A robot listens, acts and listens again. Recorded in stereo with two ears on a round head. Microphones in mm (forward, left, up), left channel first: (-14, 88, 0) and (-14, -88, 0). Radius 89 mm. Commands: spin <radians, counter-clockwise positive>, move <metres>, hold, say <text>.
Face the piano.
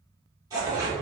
hold
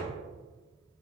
hold
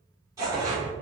say I can't make out a piano to turn to.